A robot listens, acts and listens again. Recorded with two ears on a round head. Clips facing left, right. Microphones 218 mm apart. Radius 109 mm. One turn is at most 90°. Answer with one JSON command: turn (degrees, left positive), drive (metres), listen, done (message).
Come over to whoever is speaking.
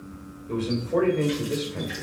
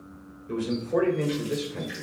{"turn": -15}
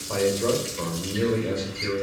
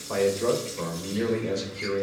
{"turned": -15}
{"turn": -90}
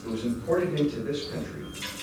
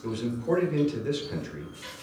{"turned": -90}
{"turn": -60}
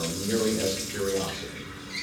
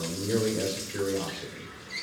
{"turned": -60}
{"drive": 1.0}
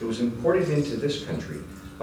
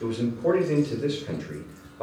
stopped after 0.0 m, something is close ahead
{"done": "Blocked. The man speaking is further on, straight ahead."}